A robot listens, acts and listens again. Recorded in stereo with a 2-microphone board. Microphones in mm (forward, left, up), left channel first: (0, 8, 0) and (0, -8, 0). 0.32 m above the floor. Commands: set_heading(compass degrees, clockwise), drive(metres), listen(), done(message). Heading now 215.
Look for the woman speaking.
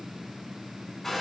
listen()
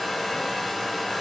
listen()
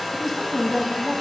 set_heading(185)
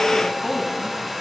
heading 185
set_heading(50)
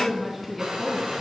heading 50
done("Facing the woman speaking, 2 to 4 m away.")